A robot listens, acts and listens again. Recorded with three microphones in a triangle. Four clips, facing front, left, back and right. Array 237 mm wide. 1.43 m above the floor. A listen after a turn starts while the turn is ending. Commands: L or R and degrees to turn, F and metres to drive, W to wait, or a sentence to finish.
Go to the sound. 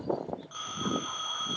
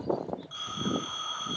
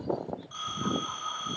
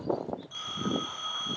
R15
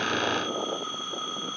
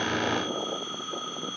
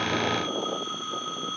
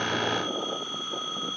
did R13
F1.0
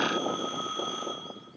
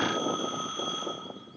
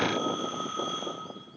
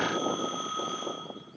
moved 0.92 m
R15
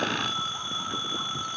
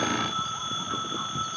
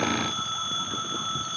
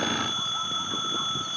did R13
F1.0
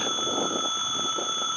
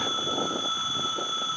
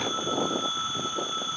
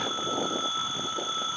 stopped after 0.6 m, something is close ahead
R10
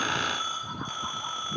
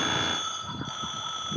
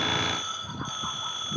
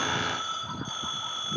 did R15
I am next to the phone ringing.